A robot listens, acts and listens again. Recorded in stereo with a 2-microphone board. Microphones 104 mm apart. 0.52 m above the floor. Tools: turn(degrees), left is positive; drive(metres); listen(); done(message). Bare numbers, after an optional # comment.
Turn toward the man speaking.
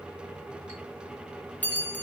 listen()
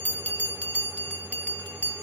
listen()
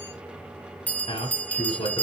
# The man speaking: about 70° left or 110° left.
turn(70)
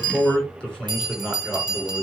# So it is at 10° left.
turn(10)
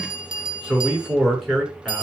done("Facing the man speaking.")